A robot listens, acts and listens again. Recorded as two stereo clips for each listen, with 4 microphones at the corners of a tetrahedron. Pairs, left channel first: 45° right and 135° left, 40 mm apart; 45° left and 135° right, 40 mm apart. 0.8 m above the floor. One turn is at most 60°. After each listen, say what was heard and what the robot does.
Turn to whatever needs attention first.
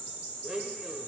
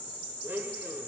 Keep listening.
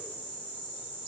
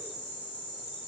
Keep listening.
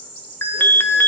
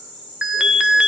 The alarm: 65° right. Turn 60° right.
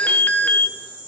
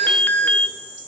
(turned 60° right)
Found it: an alarm, straight ahead, under 1 m away.